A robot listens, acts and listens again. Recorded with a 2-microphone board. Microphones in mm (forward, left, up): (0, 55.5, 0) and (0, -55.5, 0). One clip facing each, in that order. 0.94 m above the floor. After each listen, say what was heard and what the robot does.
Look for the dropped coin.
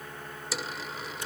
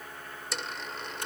Turn 30° left.
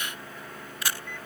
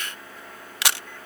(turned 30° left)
Keep listening.
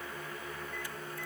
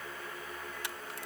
I heard a dropped coin, but can't make it out now. It was about 25° right or 145° left.